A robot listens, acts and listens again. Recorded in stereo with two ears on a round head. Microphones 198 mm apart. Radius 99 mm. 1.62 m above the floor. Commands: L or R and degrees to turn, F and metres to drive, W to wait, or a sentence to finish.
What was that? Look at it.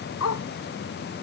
L75
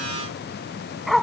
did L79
Facing the dog barking.